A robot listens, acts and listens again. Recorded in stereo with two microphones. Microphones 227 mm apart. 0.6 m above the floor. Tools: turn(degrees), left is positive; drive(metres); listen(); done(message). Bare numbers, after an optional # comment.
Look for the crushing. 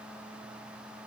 listen()
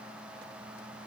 listen()
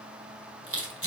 # The crushing: about 70° right or 110° right.
turn(-70)
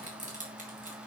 # So it is at 35° right.
turn(-35)
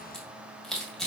done("Found it: crushing, straight ahead, 2 to 4 m away.")